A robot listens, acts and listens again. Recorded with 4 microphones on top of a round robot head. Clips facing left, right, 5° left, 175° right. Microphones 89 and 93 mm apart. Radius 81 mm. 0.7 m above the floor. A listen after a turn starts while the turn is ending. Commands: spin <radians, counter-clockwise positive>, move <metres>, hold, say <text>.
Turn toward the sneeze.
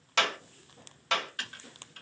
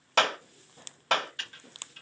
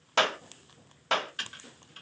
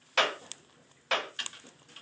hold
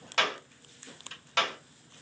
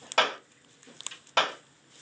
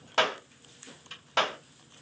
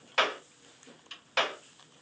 hold
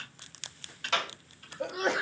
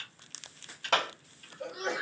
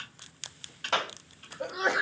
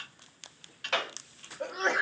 spin 1.48
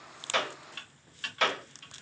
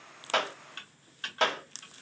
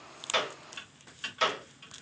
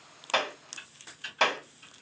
say I heard a sneeze from this way, but can't make it out now.